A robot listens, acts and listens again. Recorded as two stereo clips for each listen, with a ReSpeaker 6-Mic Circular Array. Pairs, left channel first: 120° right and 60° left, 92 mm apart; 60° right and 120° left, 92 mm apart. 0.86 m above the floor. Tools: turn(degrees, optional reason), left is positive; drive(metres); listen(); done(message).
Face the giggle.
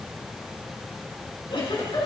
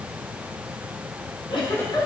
turn(degrees=-95, reason="The giggle: 95° right.")
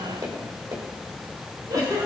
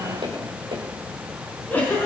turn(degrees=10, reason="The giggle is now 10° left.")
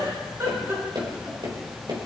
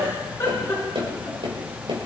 done("Found it: a giggle, straight ahead, over 4 m away.")